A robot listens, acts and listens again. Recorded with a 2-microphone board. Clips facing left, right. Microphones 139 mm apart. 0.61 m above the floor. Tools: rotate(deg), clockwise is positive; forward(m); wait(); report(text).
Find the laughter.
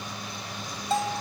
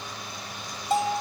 wait()
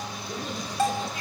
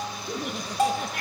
rotate(70)
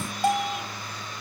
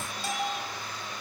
wait()
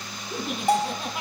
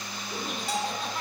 rotate(-10)
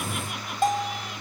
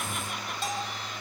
wait()
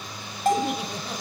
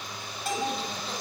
wait()
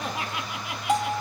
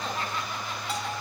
rotate(-10)
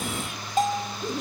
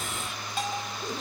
report("Found it: laughter, straight ahead.")